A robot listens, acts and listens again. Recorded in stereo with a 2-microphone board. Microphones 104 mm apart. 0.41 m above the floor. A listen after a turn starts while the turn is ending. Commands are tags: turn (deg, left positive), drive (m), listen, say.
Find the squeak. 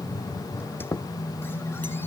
<turn deg="20"/>
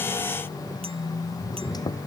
<listen/>
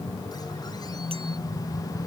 <listen/>
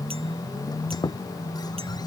<turn deg="140"/>
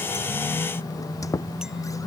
<turn deg="35"/>
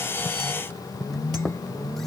<say>Found it: a squeak, straight ahead.</say>